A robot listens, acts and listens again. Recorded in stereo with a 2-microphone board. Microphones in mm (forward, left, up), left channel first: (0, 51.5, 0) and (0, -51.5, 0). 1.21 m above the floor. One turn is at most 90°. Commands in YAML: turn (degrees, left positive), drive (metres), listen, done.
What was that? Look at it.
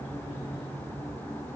listen: true
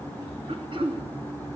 turn: -60
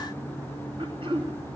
turn: -60
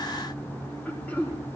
turn: 15
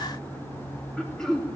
done: "Found it: throat clearing, straight ahead, 2 to 4 m away."